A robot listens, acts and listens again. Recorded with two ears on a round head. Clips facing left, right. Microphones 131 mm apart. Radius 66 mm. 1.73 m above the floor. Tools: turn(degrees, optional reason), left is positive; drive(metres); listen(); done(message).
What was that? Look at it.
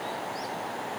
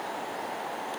listen()
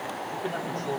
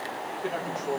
turn(degrees=-30)
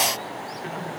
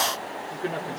turn(degrees=-130, reason="So it is at 130° right.")
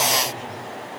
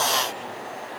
listen()
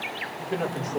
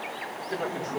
done("Found it: a man speaking, straight ahead.")